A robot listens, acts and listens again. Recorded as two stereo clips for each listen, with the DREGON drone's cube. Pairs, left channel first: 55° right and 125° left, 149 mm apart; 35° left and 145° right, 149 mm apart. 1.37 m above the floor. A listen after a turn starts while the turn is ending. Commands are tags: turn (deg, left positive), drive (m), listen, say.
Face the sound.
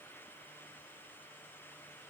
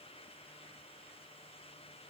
<listen/>
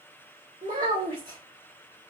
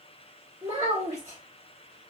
<turn deg="150"/>
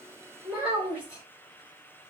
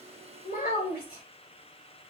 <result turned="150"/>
<turn deg="45"/>
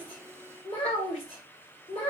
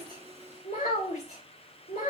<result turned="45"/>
<say>Facing the child speaking.</say>